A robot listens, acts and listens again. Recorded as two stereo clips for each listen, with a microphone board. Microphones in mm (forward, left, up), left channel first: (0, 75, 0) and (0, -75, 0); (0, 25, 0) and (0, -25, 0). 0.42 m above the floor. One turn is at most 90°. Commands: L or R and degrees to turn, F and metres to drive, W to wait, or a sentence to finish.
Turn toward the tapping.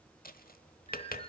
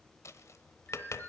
L65
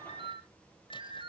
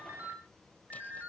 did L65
W
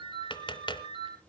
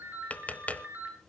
L30
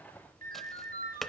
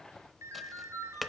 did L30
Found it: tapping, straight ahead.